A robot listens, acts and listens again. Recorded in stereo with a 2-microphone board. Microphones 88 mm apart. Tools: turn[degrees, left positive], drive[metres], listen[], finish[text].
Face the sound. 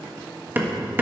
Thought: The hammering: about 20° right or 160° right.
Action: turn[-20]
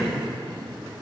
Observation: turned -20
Action: finish[Found it: hammering, straight ahead.]